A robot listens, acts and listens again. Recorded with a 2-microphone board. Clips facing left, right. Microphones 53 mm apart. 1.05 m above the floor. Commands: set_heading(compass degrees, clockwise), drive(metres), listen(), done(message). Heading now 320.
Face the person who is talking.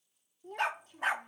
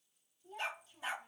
set_heading(265)
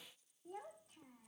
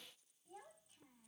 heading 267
set_heading(182)
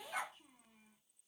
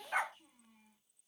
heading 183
set_heading(173)
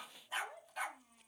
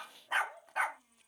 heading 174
done("Facing the child speaking, 2 to 4 m away.")